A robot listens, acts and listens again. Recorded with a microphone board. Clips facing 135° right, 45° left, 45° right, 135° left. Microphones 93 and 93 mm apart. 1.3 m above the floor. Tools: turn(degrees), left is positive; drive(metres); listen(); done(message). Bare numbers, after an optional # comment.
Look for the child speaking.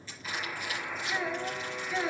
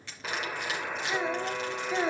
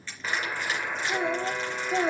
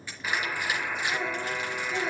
# The child speaking: 10° right.
turn(-10)
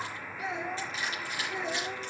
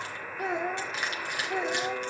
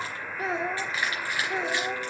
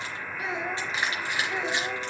# The child speaking is now 15° left.
turn(15)
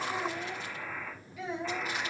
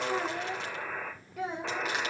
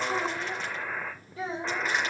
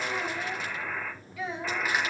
# The child speaking is now 10° left.
turn(10)
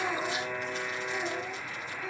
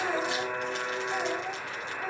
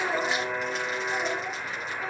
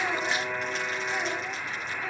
listen()
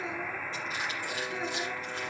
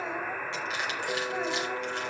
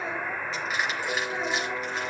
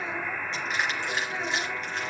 listen()
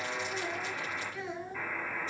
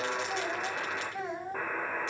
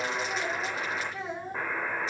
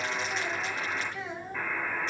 done("Facing the child speaking, over 4 m away.")